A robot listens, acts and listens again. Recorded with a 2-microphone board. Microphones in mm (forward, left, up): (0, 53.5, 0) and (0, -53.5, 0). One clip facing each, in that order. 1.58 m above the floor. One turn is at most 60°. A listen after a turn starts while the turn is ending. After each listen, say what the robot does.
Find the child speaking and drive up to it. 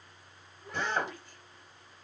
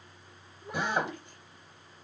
Turn 15° right.
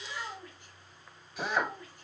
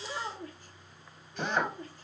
Turn 60° right.
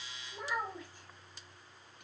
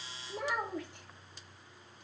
Turn 60° right.
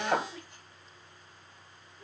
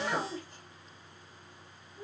Turn 40° right.
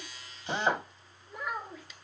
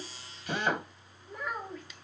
Drive 1.0 m forward.
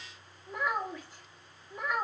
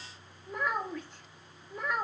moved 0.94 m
Drive 1.0 m forward.
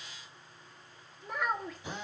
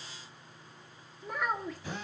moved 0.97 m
Drive 1.0 m forward.
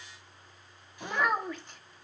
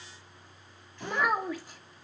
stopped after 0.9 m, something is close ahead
Arrived at the child speaking, straight ahead.